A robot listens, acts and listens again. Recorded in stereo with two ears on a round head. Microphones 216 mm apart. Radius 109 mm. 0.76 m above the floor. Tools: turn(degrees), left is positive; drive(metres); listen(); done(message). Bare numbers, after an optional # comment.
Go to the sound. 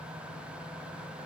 listen()
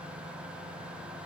listen()
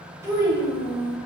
turn(-30)
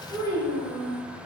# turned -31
# So it is at 20° left.
turn(20)
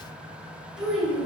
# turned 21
drive(1.0)
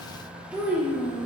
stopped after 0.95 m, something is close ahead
done("Arrived at the child speaking, straight ahead.")